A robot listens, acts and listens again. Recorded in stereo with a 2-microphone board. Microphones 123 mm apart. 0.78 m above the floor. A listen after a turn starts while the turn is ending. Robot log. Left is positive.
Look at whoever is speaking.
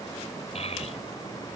note: The child speaking: about 60° left or 120° left.
cmd yaw +60
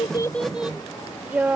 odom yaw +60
note: So it is at 15° right.
cmd yaw -15
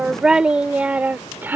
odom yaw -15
note: The child speaking is now 15° right.
cmd yaw -15
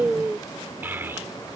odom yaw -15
note: The child speaking is now 20° right.
cmd yaw -20
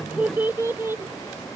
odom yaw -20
note: The child speaking is now 20° right.
cmd yaw -20
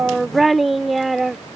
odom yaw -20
end: Found it: a child speaking, straight ahead.